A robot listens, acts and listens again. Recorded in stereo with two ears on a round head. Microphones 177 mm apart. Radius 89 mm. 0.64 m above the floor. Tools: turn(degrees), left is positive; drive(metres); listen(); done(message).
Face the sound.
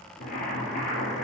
turn(degrees=45)
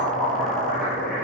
done("Found it: boiling, straight ahead, 2 to 4 m away.")